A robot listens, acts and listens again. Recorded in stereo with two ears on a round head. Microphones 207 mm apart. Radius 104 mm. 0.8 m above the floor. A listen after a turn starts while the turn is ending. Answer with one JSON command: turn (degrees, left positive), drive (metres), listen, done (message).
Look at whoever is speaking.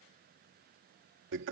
{"listen": true}
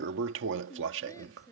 {"turn": 30}
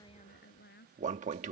{"turn": 135}
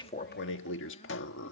{"listen": true}
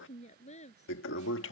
{"turn": 30}
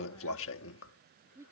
{"turn": -10}
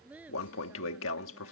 {"done": "Found it: a woman speaking, straight ahead."}